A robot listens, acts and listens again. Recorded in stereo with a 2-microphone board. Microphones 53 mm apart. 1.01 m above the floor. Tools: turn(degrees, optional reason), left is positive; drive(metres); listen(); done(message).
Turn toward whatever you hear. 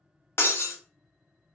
turn(degrees=50, reason="The breaking glass: about 50° left or 130° left.")
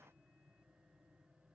listen()
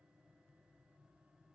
done("I heard breaking glass, but can't make it out now. It was about straight ahead or 80° left.")